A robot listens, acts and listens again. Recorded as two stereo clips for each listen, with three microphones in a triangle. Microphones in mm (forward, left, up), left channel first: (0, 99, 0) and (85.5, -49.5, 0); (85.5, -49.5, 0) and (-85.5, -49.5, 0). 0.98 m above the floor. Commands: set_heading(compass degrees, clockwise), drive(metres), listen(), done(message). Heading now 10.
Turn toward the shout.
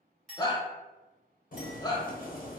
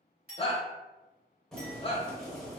set_heading(315)
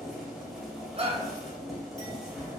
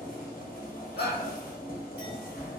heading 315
done("Found it: a shout, straight ahead.")